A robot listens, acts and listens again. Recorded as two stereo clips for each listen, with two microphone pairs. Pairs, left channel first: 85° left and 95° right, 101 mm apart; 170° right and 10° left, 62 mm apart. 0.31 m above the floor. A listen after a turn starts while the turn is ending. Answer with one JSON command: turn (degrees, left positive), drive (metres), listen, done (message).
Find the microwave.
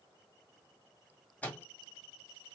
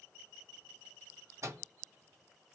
{"turn": 15}
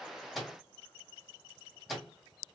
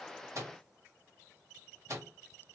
{"done": "Found it: a microwave, straight ahead."}